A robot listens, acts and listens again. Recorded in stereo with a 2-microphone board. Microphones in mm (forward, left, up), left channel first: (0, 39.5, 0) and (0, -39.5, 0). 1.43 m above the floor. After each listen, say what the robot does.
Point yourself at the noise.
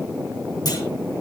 Turn 60° left.
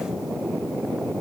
Keep listening.
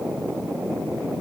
I heard a clunk, but can't make it out now. It was about straight ahead or 60° left.